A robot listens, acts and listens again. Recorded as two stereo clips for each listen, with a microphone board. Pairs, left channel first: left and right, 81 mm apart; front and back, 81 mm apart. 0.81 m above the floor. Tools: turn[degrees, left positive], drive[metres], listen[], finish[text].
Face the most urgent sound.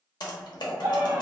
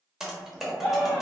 Thought: The scream: 100° right.
Action: turn[-100]
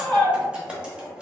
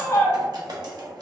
Action: finish[Found it: a scream, straight ahead, 1 to 2 m away.]